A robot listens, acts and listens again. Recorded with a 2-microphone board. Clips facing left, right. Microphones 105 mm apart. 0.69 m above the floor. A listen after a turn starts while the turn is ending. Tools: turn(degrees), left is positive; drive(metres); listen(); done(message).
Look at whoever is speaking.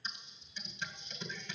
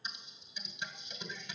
listen()
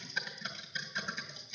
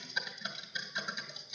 listen()
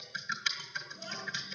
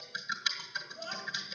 turn(degrees=-45)
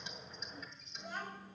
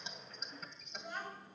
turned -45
done("Facing the child speaking, 2 to 4 m away.")